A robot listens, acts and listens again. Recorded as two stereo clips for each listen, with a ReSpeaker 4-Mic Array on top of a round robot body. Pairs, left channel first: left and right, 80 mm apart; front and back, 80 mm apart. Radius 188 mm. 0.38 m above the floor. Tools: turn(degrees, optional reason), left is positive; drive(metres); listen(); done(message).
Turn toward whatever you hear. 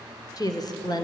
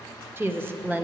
turn(degrees=110, reason="The woman speaking: 110° left.")
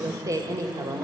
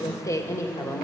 turn(degrees=-55, reason="The woman speaking is now 55° right.")
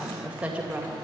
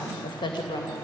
turn(degrees=-20, reason="The woman speaking is now 20° right.")
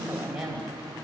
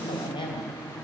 turn(degrees=-10, reason="The woman speaking is now 10° right.")
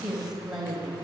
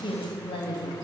turn(degrees=-10, reason="The woman speaking is now 10° right.")
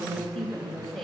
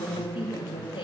done("Facing the woman speaking.")